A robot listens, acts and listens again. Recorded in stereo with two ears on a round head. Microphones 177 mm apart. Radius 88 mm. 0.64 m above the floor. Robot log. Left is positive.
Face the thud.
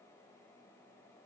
cmd idle
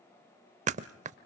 note: The thud: about 40° right or 140° right.
cmd yaw -40
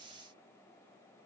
cmd idle
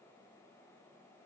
end: I heard a thud, but can't make it out now. It was about straight ahead or 100° right.